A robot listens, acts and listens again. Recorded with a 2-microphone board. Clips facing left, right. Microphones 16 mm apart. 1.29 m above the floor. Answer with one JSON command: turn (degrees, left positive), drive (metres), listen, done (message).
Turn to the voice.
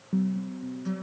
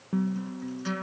{"listen": true}
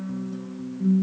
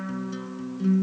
{"listen": true}
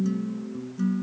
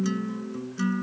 {"done": "I can't make out anyone speaking, only a guitar."}